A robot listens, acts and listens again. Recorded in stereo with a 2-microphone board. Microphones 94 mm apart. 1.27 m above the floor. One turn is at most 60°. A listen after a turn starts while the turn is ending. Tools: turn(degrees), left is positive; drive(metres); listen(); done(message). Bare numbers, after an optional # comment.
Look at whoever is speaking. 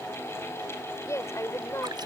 # The woman speaking: about 30° left or 150° left.
turn(30)
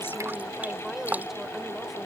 done("Found it: a woman speaking, straight ahead.")